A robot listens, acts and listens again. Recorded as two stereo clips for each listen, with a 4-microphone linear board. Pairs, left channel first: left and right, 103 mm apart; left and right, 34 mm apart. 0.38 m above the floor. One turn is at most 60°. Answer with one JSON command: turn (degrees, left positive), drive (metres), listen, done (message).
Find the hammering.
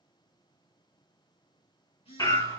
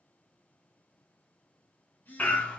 {"turn": 40}
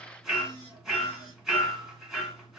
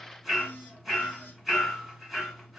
{"done": "Found it: hammering, straight ahead, 1 to 2 m away."}